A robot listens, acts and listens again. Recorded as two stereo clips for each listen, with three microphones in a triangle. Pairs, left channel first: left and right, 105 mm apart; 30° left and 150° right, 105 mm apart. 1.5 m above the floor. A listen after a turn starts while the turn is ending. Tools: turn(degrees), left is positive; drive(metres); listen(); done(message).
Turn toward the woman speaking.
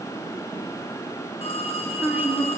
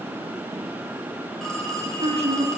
turn(degrees=-165)
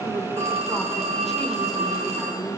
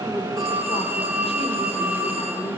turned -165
listen()
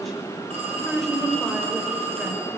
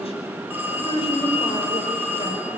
done("Found it: a woman speaking, straight ahead, over 4 m away.")